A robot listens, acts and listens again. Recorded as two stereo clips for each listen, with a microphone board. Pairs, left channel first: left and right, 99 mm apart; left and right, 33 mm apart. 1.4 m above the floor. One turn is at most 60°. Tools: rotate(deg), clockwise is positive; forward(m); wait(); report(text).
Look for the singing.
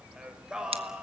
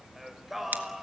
rotate(30)
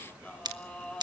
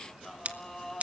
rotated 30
rotate(-10)
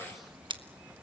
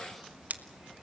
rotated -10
wait()
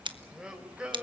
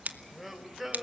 rotate(10)
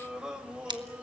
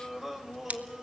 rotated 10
rotate(10)
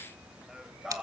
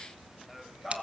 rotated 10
report("Found it: singing, straight ahead.")